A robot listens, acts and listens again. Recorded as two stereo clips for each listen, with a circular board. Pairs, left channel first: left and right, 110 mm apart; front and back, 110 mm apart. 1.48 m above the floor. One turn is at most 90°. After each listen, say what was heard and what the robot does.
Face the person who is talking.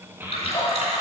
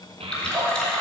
The child speaking: 160° right. Turn 90° right.
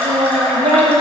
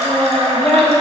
The child speaking is now 75° right. Turn 75° right.
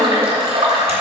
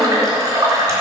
Keep listening.
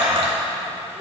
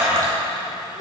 Found it: a child speaking, straight ahead.